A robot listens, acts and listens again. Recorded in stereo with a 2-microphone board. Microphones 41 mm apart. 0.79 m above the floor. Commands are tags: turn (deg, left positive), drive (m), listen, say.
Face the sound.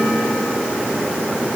<listen/>
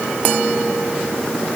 <listen/>
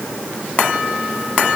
<say>I can't make out anything.</say>